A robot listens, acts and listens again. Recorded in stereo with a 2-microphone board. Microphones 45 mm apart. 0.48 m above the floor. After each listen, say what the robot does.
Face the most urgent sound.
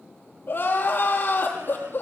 Turn 45° left.
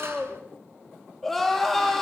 Found it: crying, straight ahead.